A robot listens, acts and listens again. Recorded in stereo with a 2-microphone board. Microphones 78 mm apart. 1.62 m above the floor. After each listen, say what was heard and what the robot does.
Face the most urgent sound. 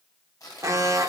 The alarm: about 40° right or 140° right. Turn 40° right.
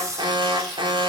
So it is at 95° right. Turn 95° right.
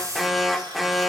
Found it: an alarm, straight ahead.